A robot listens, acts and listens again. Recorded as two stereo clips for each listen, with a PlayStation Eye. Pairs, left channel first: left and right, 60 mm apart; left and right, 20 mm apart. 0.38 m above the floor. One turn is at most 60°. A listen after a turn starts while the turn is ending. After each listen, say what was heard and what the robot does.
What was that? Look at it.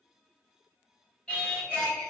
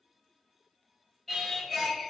The singing: about 20° left or 160° left. Turn 20° left.
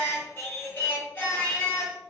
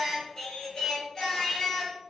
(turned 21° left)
So it is at 140° left. Turn 60° left.
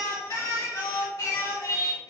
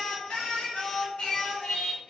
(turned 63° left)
The singing is now 75° left. Turn 60° left.
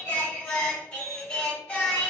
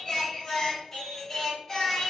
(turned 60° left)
The singing is now 20° left. Turn 20° left.
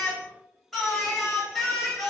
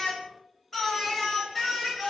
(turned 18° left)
Facing the singing, 1 to 2 m away.